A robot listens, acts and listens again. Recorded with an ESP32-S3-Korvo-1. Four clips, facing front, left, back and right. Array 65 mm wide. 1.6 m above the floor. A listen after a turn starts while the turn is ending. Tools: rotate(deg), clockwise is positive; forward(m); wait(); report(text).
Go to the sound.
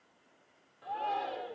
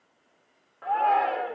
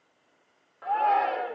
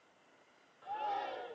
rotate(-130)
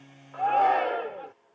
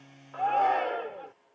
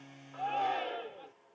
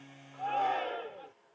rotate(-25)
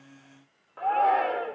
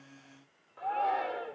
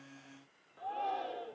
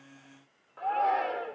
forward(1.0)
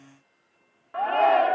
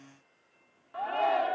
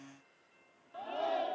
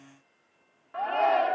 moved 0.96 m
rotate(10)
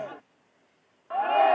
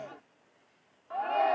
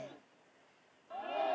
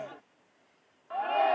forward(1.0)
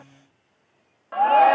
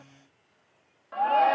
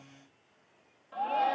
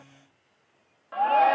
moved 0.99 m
forward(1.0)
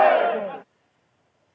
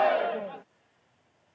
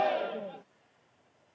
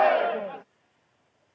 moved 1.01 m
forward(1.0)
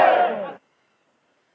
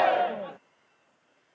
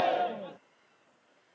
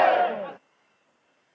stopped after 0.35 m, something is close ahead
rotate(10)
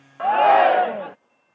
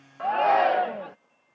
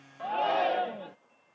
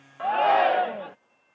report("I am next to the shout.")